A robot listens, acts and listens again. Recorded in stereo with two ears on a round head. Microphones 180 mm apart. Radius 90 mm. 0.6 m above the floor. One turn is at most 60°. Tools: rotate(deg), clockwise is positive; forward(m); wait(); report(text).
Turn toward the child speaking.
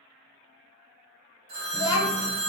rotate(-40)
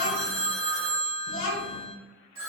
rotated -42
rotate(-60)
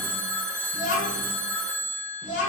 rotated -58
rotate(-40)
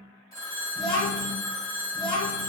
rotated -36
report("Found it: a child speaking, straight ahead, 1 to 2 m away.")